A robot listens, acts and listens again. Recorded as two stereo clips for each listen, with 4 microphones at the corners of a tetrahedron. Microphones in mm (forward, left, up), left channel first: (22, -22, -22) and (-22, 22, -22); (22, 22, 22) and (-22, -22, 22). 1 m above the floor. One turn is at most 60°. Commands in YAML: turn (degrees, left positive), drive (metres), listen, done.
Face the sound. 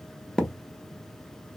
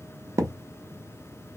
turn: -60
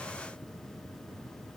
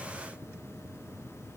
turn: -60
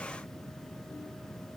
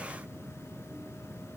done: "I heard a thud from this way, but can't make it out now."